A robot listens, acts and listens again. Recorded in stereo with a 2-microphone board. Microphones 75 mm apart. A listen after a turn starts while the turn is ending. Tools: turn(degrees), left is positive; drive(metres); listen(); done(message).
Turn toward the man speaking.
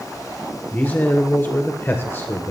turn(degrees=35)
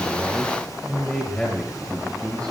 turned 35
turn(degrees=10)
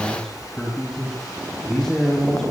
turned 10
turn(degrees=10)
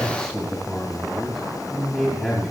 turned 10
done("Found it: a man speaking, straight ahead, over 4 m away.")